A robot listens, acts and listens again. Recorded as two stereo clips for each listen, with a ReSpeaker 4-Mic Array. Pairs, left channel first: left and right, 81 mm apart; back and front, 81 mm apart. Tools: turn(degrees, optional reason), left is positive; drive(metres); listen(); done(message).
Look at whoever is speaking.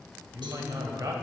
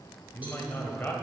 turn(degrees=-120, reason="The man speaking: 120° right.")
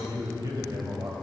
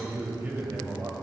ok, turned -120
turn(degrees=-60, reason="The man speaking is now 60° right.")
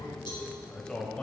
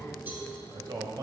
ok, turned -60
turn(degrees=15, reason="The man speaking is now 15° left.")
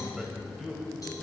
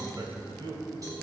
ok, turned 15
done("Facing the man speaking.")